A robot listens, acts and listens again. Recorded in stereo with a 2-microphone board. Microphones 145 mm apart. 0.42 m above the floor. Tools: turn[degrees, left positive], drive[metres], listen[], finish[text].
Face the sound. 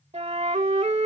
Thought: The flute: about 50° right or 130° right.
Action: turn[-50]
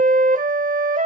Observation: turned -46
Thought: So it is at 80° right.
Action: turn[-80]
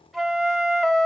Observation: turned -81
Action: finish[Found it: a flute, straight ahead, under 1 m away.]